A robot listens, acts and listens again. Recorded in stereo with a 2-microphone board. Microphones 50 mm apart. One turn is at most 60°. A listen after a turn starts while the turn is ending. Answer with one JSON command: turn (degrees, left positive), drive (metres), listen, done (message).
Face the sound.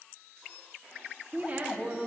{"turn": -25}
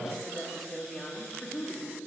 {"turn": 25}
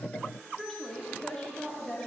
{"turn": 20}
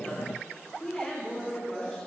{"turn": 10}
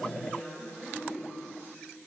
{"done": "Facing the woman speaking, 2 to 4 m away."}